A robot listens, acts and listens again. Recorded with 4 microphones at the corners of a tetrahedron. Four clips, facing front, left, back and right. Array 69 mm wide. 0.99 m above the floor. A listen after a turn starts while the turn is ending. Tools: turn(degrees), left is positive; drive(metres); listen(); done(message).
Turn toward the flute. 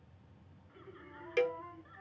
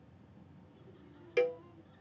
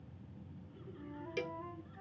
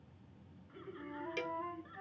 turn(degrees=-85)
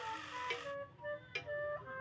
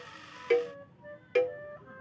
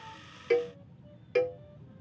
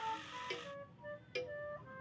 done("Facing the flute.")